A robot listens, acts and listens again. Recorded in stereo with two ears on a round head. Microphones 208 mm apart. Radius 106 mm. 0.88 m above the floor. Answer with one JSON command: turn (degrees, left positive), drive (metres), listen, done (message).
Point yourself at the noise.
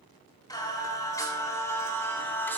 {"turn": 30}
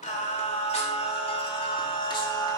{"turn": 20}
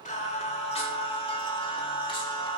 {"turn": 25}
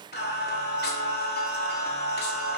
{"turn": 135}
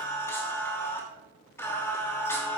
{"turn": 10}
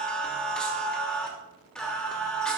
{"done": "Facing the singing, 2 to 4 m away."}